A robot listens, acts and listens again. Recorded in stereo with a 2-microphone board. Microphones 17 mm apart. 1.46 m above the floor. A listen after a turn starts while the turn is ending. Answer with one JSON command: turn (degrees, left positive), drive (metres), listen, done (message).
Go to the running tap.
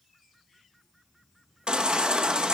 {"listen": true}
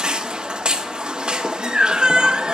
{"listen": true}
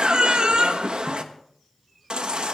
{"done": "I can't make out a running tap to turn to."}